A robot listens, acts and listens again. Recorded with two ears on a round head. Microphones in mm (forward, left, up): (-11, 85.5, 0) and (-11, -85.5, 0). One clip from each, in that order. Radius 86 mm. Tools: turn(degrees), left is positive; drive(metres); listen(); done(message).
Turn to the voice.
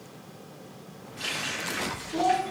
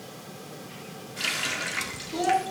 turn(degrees=-90)
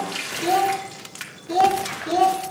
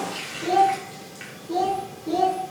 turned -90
turn(degrees=40)
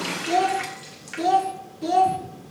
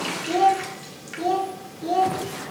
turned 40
turn(degrees=25)
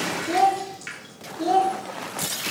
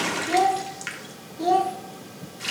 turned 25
turn(degrees=-10)
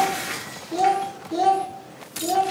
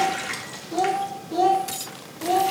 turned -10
done("Found it: a child speaking, straight ahead, 1 to 2 m away.")